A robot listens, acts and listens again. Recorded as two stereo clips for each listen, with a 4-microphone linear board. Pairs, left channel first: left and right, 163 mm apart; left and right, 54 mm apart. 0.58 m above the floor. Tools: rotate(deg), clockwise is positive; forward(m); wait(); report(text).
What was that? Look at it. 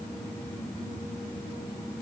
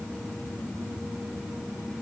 wait()
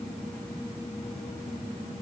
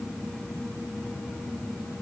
wait()
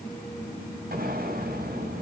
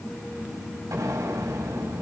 rotate(70)
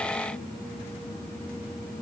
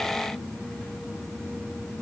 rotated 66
wait()
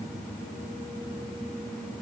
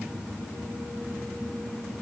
report("I heard an explosion, but can't make it out now. It was about 5° right or 45° right.")